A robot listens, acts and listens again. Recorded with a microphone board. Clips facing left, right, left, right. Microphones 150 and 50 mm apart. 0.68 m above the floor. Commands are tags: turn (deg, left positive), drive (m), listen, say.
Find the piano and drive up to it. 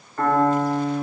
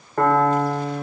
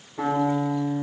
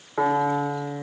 <turn deg="-70"/>
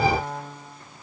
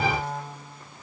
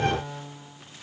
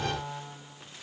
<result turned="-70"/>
<drive m="1.0"/>
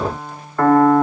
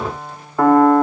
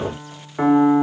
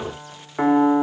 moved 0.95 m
<turn deg="-10"/>
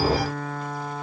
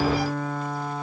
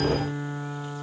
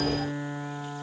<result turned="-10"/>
<drive m="1.0"/>
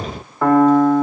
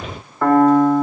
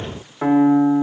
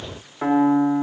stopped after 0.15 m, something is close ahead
<say>Arrived at the piano, straight ahead.</say>